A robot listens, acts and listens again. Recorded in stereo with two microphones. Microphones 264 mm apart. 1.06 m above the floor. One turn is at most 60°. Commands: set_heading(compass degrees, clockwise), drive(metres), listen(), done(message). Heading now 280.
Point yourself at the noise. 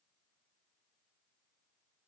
listen()
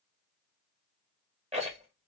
set_heading(305)
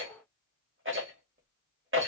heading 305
set_heading(5)
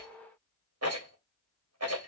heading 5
set_heading(65)
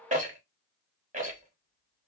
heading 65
set_heading(95)
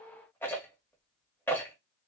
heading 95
set_heading(85)
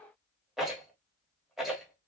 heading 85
done("Facing the rattle.")